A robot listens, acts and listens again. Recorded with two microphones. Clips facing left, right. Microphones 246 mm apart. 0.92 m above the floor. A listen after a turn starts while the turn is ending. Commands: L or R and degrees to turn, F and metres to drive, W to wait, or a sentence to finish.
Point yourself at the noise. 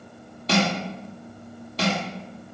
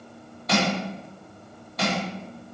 L30
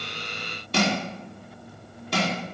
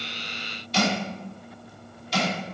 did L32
L120
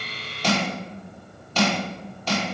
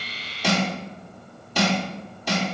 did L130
R15
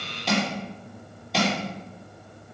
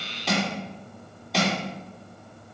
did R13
Found it: crushing, straight ahead, 2 to 4 m away.